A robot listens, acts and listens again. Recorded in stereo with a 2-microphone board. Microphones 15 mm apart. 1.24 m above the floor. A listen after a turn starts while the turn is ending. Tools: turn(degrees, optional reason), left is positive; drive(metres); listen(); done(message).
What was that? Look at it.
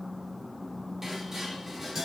turn(degrees=-40, reason="The dishes clattering: about 40° right or 140° right.")
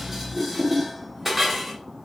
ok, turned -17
turn(degrees=-25, reason="So it is at 25° right.")
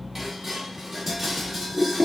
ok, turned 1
turn(degrees=-25, reason="The dishes clattering is now 25° right.")
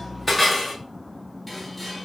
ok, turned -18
done("Facing the dishes clattering.")